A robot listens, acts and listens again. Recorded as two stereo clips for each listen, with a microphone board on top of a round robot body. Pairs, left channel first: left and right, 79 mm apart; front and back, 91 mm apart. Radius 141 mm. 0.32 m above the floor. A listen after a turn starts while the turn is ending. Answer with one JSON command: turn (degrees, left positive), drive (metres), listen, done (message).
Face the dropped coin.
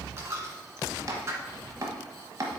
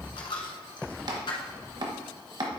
{"turn": -35}
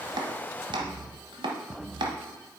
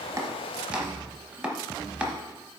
{"done": "I heard a dropped coin from this way, but can't make it out now."}